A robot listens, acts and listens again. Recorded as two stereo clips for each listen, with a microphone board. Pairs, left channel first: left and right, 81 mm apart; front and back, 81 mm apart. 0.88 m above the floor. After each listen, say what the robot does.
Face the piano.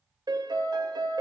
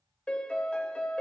Turn 75° right.
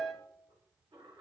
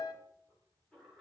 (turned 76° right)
Facing the piano, 1 to 2 m away.